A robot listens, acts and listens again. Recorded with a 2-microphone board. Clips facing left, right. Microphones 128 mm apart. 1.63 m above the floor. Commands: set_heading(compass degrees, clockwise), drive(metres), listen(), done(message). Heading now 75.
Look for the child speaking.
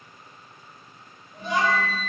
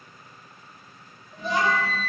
set_heading(110)
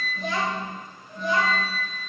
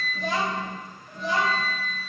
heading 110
set_heading(225)
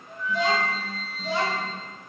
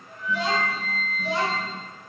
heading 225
set_heading(245)
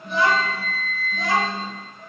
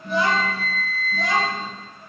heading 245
done("Found it: a child speaking, straight ahead, 2 to 4 m away.")